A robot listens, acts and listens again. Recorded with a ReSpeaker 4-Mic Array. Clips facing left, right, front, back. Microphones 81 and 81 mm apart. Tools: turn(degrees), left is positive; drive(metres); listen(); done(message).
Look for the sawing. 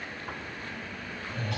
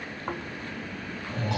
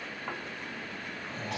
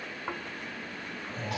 listen()
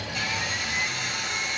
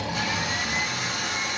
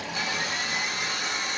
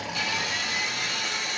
turn(degrees=-55)
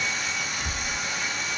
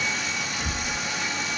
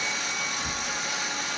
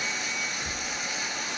done("Found it: sawing, straight ahead, 1 to 2 m away.")